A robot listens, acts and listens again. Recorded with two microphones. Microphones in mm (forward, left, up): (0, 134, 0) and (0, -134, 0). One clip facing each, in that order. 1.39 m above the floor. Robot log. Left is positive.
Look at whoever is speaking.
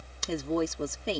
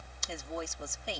note: The woman speaking: about 70° left or 110° left.
cmd yaw +70
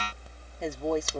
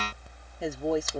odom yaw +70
end: Facing the woman speaking.